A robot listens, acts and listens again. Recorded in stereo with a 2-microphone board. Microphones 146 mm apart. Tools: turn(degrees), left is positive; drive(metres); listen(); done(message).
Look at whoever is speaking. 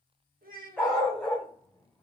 turn(degrees=-75)
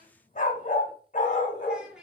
done("Facing the child speaking.")